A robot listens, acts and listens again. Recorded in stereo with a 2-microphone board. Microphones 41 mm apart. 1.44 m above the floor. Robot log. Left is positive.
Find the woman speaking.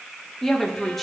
cmd yaw +30
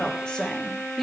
cmd yaw +30
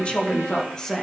cmd yaw +30
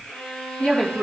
note: So it is at 155° left.
cmd yaw +155
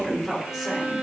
note: The woman speaking is now 10° right.
cmd yaw -10
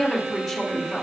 end: Facing the woman speaking.